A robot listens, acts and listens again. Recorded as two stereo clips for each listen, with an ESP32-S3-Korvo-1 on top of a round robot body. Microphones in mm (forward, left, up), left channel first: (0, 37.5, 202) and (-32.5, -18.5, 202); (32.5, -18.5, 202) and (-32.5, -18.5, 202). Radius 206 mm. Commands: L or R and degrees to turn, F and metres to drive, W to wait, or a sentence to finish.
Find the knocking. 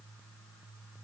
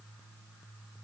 W
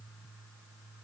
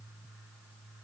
W
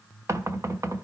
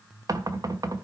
R160
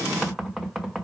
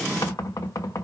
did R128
R30
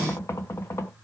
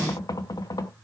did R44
L10
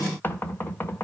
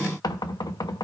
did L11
Facing the knocking.